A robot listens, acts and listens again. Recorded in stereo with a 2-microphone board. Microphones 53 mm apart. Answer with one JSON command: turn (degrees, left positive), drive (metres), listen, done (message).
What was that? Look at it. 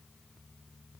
{"listen": true}
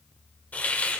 {"turn": 30}
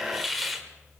{"done": "Facing the hiss."}